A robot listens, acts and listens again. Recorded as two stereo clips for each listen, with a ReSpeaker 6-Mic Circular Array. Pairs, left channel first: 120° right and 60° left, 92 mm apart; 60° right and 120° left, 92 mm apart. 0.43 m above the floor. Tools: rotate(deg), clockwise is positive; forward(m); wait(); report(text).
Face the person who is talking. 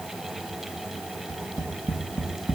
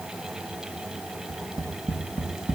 wait()
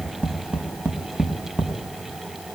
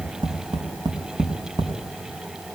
wait()
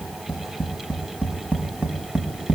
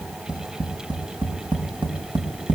report("I can't make out anyone speaking to turn to.")